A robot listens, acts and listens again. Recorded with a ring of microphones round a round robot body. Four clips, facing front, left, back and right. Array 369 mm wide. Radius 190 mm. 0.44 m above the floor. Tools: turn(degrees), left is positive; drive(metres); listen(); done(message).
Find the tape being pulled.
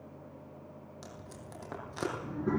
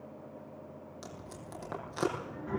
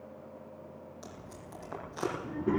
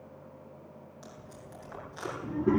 turn(degrees=60)
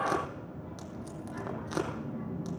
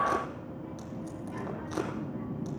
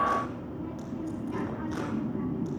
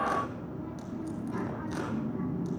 done("Facing the tape being pulled.")